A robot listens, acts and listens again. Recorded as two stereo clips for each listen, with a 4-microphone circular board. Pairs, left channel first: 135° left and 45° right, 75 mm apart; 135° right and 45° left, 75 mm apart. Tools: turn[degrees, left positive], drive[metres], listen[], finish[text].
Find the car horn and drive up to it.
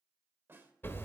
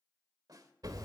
Action: listen[]
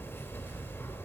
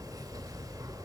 Action: listen[]
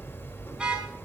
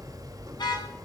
Thought: The car horn: 125° right.
Action: turn[-125]
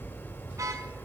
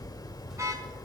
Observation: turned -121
Action: listen[]
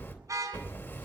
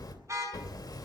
Action: drive[1.0]
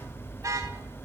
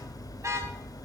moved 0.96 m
Action: listen[]
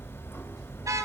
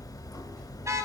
Action: listen[]
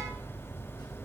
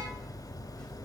Action: finish[I heard a car horn from this way, but can't make it out now. I did not reach it.]